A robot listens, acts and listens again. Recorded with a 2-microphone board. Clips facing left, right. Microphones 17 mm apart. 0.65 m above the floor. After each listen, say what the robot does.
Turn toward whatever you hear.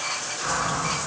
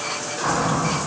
Turn 70° right.
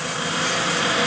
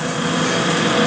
Turn 40° right.
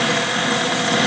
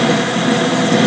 Turn 10° left.
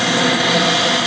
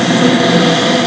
Facing the cupboard door.